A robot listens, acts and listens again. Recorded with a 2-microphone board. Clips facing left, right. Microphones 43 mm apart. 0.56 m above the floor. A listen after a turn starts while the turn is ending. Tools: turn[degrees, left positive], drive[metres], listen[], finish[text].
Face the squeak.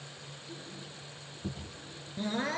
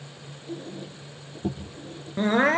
Thought: The squeak: about 55° right or 125° right.
Action: turn[-55]
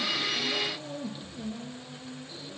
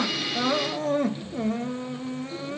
Action: finish[Facing the squeak, over 4 m away.]